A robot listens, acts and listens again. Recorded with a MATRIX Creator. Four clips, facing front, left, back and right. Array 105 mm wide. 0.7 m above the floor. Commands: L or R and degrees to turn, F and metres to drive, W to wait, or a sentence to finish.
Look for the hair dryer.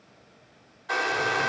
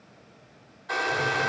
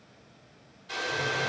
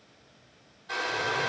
L25
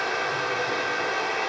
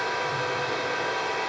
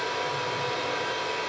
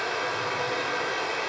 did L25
Found it: a hair dryer, straight ahead.